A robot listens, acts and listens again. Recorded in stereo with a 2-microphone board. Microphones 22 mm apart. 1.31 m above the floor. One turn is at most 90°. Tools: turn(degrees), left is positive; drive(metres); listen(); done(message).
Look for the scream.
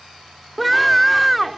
turn(degrees=30)
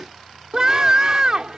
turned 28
turn(degrees=-25)
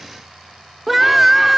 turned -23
done("Found it: a scream, straight ahead.")